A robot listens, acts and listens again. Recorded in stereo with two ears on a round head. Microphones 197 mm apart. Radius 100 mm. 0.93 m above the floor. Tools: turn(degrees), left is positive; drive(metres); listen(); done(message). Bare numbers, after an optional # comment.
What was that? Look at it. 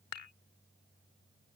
turn(90)
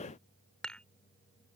done("Found it: dishes clattering, straight ahead.")